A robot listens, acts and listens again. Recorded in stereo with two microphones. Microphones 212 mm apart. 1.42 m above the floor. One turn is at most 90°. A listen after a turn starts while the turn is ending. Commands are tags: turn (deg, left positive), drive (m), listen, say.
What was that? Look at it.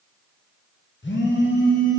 <turn deg="60"/>
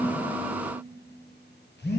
<turn deg="55"/>
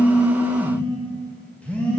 <say>Found it: a phone buzzing, straight ahead.</say>